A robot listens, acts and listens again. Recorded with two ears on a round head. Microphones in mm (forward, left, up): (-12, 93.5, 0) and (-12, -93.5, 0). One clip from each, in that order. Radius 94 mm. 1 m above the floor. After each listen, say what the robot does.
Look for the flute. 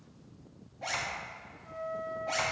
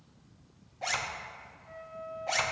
Turn 55° left.
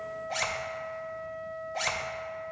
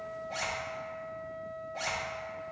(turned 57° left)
Facing the flute, 1 to 2 m away.